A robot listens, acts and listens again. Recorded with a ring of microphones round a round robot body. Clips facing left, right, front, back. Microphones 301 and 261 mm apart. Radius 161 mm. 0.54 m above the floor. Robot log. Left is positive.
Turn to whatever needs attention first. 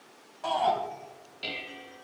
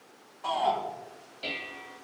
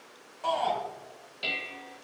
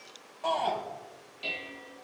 note: The shout: 70° left.
cmd yaw +70
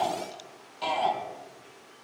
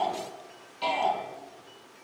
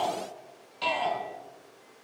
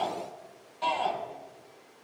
note: The shout is now 45° left.
cmd yaw +45
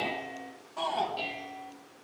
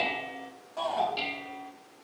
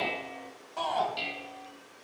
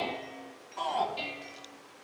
note: The shout is now 10° left.
cmd yaw +10
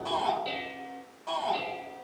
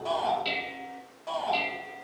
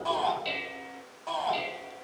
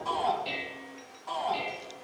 end: Found it: a shout, straight ahead, over 4 m away.